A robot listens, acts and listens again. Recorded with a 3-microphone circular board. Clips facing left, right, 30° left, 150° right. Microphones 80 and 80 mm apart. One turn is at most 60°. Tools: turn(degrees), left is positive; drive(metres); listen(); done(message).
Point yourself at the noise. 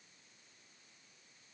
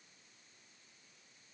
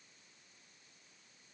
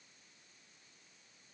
listen()
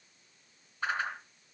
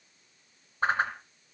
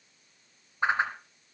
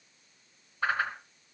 turn(degrees=-40)
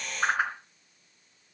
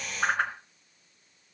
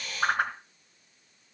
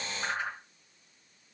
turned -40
done("Found it: a whoosh, straight ahead, 2 to 4 m away.")